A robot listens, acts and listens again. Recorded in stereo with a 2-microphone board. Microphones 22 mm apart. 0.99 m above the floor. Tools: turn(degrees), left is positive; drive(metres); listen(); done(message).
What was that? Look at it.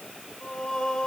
turn(degrees=35)
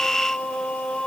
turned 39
turn(degrees=105)
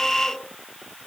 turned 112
listen()
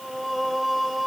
done("Found it: singing, straight ahead, 2 to 4 m away.")